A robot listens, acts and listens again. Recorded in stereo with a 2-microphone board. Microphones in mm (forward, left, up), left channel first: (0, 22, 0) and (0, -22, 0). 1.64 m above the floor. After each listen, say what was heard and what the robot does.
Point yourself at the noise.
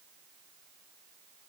Keep listening.
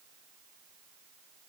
Keep listening.
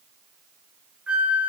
The flute: about 25° right or 155° right. Turn 25° right.
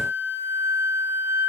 So it is at 130° right. Turn 130° right.
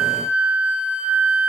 The flute is now 25° right. Turn 25° right.
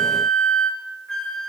The flute is now 10° left. Turn 10° left.
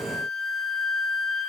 Found it: a flute, straight ahead, 1 to 2 m away.